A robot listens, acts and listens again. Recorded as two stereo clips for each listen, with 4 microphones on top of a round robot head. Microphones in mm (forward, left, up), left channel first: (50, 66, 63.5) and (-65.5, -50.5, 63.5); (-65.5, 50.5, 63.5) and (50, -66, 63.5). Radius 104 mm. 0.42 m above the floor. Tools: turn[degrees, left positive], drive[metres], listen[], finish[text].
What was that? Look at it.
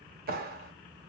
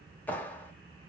Thought: The clap: 145° right.
Action: turn[-145]
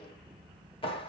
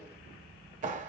Thought: The clap is now 10° right.
Action: turn[-10]
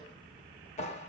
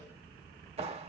Action: finish[Facing the clap.]